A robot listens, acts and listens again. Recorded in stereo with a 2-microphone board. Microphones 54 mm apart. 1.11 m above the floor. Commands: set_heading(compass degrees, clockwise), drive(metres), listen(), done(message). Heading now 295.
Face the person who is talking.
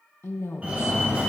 set_heading(240)
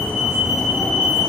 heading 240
listen()
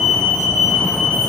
listen()
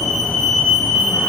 done("I heard a woman speaking, but can't make it out now. It was about straight ahead or 70° left.")